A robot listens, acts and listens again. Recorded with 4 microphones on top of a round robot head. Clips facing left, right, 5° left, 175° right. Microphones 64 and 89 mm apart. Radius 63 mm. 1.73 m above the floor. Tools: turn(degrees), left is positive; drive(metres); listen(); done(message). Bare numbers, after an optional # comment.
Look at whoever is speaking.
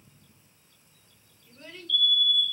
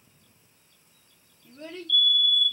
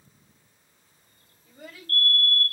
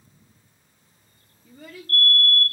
# The child speaking: 130° right.
turn(-130)
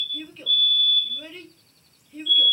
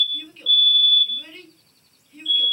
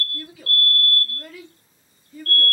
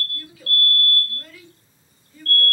done("Facing the child speaking.")